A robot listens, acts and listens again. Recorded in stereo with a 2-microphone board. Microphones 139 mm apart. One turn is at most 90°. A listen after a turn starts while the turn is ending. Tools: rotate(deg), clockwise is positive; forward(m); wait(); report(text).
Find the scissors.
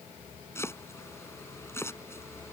wait()
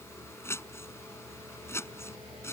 wait()
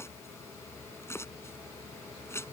report("I can't make out scissors to turn to.")